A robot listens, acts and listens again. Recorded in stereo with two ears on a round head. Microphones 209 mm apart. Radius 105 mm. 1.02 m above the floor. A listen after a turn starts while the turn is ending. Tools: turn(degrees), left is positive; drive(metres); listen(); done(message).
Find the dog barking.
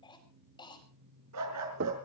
turn(degrees=-90)
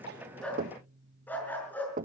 turn(degrees=10)
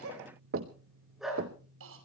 done("Found it: a dog barking, straight ahead, over 4 m away.")